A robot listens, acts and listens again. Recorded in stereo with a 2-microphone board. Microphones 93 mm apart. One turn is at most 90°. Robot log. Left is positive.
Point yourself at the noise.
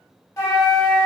note: The flute: about 35° left or 145° left.
cmd yaw +35
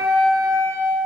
end: Found it: a flute, straight ahead, under 1 m away.